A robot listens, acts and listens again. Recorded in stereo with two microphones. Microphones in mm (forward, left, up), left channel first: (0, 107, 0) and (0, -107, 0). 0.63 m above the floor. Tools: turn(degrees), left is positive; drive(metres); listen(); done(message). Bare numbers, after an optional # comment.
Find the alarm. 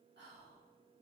listen()
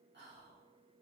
listen()
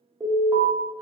turn(-30)
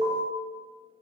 # So it is at 135° right.
turn(-135)
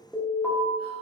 done("Facing the alarm, 1 to 2 m away.")